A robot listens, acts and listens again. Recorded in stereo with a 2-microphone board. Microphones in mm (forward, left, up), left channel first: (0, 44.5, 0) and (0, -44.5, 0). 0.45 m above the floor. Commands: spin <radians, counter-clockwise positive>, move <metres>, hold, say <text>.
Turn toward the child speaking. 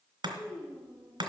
spin 0.44
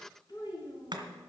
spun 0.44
spin 2.09
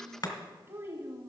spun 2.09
spin -0.61
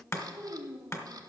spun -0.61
spin -0.52
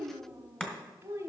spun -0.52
spin -0.52
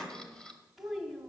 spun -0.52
say Found it: a child speaking, straight ahead, 1 to 2 m away.